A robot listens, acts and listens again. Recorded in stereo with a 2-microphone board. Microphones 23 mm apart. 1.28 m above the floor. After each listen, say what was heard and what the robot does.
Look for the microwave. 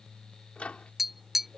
The microwave: about 75° left or 105° left. Turn 75° left.
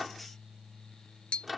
Found it: a microwave, straight ahead.